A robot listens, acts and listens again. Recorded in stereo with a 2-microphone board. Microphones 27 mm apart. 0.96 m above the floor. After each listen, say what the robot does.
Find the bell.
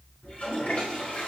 Keep listening.
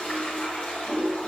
Keep listening.
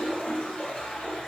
I can't make out a bell, only a toilet flushing.